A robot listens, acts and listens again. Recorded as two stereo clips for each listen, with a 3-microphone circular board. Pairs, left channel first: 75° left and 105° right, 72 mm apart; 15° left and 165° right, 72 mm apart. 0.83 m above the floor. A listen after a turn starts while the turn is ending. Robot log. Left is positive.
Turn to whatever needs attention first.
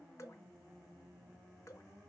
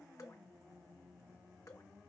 cmd idle
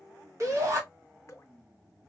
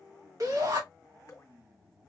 note: The shout: 140° right.
cmd yaw -140
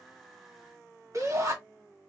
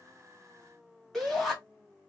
note: The shout is now 70° right.
cmd yaw -70
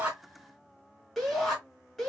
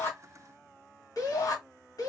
note: The shout is now 10° right.
cmd yaw -10
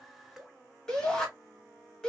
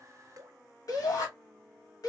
end: Facing the shout.